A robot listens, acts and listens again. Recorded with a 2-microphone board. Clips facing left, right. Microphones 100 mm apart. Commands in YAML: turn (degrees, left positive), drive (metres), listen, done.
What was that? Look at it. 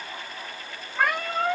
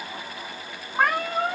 turn: -55
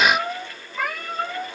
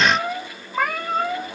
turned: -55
turn: -50
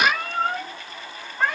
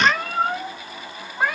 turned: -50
turn: -15
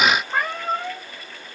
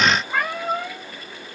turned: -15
done: "Facing the cat meowing."